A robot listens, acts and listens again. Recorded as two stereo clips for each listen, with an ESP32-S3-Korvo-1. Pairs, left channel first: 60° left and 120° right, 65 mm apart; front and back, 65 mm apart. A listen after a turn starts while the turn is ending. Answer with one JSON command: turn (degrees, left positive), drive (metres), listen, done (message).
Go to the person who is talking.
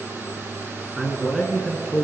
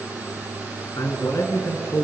{"turn": -30}
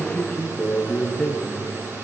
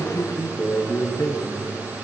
{"turn": -15}
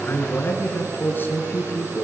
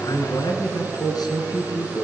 {"drive": 1.0}
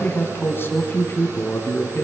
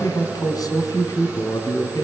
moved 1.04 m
{"drive": 1.0}
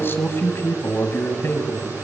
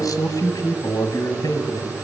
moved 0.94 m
{"turn": 10}
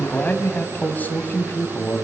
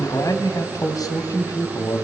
{"drive": 1.0}
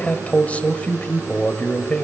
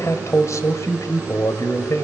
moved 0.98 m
{"drive": 1.0}
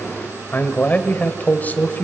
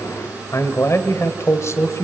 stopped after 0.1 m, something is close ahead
{"done": "I am next to the man speaking."}